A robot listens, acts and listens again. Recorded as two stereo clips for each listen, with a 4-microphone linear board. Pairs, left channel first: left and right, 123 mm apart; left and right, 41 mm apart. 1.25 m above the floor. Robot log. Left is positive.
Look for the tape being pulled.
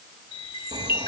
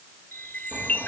cmd idle
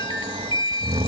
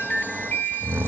cmd idle
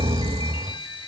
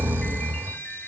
end: I can't make out tape being pulled, only snoring and a chime.